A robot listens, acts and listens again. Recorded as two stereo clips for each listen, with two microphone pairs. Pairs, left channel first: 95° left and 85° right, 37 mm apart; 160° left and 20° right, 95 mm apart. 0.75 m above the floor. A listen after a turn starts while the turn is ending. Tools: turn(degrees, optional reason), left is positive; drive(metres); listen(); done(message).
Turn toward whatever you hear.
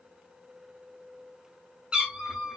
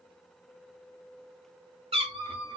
done("Found it: a cat meowing, straight ahead, 1 to 2 m away.")